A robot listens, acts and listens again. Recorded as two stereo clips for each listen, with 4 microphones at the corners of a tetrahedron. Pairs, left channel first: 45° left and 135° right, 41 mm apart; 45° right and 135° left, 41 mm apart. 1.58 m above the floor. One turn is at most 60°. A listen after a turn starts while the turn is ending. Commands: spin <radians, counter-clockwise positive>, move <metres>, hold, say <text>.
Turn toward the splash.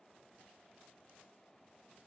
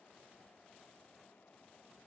hold
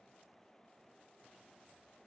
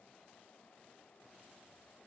hold
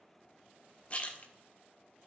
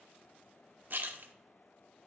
spin 1.05
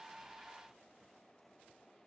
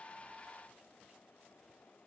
spin 0.70
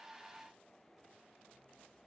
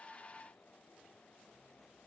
say Facing where the splash came from. I can't hear it now.